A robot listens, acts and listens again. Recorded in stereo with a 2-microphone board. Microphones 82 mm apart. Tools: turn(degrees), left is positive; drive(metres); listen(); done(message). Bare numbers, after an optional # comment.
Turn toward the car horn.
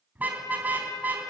# The car horn: about 20° right or 160° right.
turn(-20)
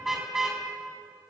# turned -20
done("Facing the car horn, over 4 m away.")